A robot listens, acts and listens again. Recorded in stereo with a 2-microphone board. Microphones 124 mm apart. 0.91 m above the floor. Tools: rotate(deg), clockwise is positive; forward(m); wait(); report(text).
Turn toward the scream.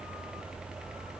wait()
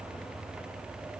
wait()
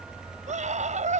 rotate(90)
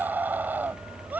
rotate(15)
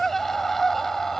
report("Facing the scream.")